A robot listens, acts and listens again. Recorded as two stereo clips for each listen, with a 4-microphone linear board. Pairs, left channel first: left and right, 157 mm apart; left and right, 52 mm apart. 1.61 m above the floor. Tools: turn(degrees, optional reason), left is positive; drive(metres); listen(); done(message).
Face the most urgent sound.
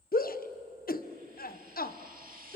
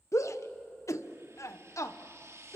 turn(degrees=70, reason="The shout: about 70° left or 110° left.")
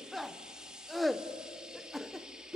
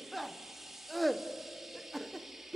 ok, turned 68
done("Found it: a shout, straight ahead.")